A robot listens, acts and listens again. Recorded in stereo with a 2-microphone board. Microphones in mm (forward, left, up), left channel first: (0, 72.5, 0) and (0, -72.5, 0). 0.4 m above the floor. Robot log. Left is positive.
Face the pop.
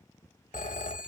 cmd idle
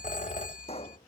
note: The pop: about 50° left or 130° left.
cmd yaw +50
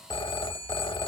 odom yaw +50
cmd idle
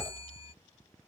end: I heard a pop, but can't make it out now. It was about straight ahead or 80° left.